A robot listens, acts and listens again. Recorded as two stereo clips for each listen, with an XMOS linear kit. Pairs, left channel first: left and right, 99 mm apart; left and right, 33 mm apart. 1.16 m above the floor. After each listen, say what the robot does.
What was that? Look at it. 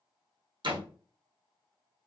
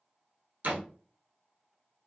Turn 55° right.
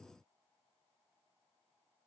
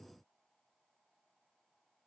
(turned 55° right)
Keep listening.
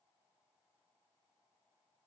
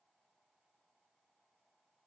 I heard a door slam, but can't make it out now. It was about straight ahead or 70° right.